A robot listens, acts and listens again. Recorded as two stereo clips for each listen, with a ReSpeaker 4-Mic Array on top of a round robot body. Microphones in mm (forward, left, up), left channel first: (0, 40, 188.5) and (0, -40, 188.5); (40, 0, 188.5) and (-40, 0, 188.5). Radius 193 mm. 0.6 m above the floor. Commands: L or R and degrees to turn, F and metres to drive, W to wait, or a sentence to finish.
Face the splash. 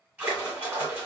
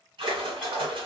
R160
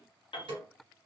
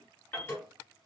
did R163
I heard a splash from this way, but can't make it out now.